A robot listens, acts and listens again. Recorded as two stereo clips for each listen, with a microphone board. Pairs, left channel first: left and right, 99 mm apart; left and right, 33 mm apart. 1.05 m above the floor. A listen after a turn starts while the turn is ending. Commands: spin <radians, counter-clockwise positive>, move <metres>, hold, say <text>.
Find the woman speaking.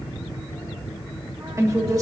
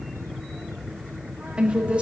spin -0.61
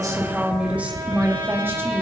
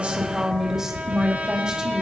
spin -0.44
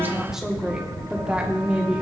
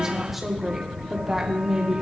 spin -0.26
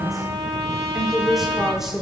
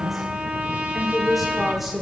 say Found it: a woman speaking, straight ahead.